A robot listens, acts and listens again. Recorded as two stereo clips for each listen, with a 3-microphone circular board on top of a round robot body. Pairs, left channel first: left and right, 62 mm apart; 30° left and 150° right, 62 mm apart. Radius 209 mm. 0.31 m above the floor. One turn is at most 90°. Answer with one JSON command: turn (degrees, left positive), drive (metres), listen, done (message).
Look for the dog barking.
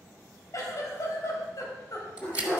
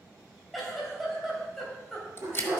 {"turn": 90}
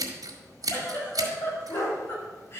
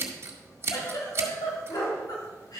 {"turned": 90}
{"turn": 60}
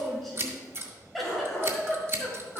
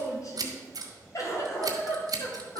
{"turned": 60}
{"turn": 15}
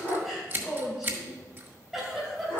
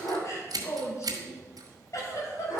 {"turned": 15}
{"turn": 10}
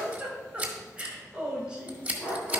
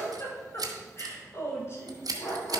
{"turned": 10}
{"done": "Facing the dog barking."}